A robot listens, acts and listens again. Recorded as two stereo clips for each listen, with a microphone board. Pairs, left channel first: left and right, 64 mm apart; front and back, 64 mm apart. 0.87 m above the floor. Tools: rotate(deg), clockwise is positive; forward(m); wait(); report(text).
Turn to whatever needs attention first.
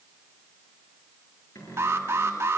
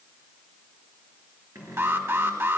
rotate(135)
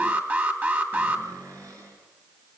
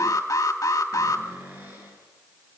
rotate(30)
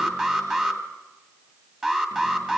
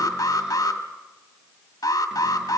rotate(10)
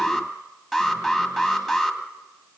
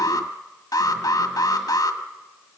report("Found it: an alarm, straight ahead.")